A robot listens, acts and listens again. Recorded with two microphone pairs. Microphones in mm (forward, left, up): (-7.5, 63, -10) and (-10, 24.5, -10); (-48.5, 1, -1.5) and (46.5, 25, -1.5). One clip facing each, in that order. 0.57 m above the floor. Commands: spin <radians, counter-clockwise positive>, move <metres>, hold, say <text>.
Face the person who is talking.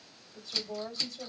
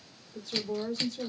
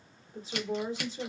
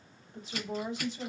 spin -2.01
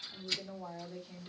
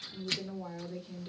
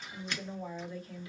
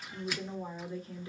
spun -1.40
spin -0.61
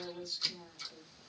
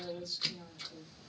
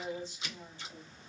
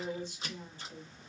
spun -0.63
say Facing the woman speaking.